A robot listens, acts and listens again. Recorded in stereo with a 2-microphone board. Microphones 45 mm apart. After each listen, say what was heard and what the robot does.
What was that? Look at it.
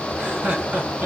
The laughter: about 30° right or 150° right. Turn 30° right.
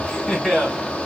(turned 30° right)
Facing the laughter.